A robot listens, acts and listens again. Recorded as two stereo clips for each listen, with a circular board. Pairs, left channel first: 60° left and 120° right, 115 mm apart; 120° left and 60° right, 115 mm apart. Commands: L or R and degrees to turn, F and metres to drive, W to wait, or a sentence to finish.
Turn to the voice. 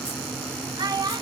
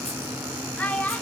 R165
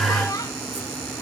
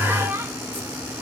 Facing the child speaking.